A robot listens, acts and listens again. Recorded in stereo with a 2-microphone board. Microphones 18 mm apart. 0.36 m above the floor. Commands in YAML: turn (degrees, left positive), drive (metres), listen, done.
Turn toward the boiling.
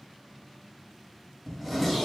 listen: true
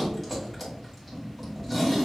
listen: true
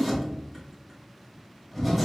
done: "I can't make out boiling to turn to."